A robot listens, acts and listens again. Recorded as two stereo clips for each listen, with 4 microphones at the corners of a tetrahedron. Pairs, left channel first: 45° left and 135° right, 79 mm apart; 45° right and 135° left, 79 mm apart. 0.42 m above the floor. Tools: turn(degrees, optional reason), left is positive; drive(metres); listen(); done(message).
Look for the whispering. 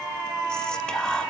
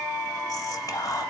turn(degrees=-30, reason="The whispering: 30° right.")
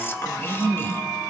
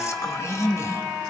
turn(degrees=-10, reason="The whispering is now 10° right.")
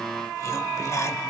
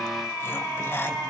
done("Facing the whispering, 1 to 2 m away.")